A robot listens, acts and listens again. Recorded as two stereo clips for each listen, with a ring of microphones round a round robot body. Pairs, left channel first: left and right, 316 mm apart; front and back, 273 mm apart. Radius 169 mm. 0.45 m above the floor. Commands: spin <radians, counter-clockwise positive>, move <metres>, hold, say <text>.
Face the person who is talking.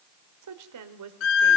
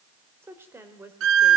spin -1.75
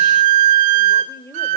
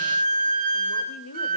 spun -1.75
spin 0.17
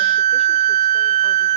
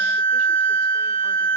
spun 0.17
hold
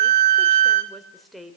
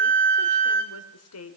say Found it: a woman speaking, straight ahead, 2 to 4 m away.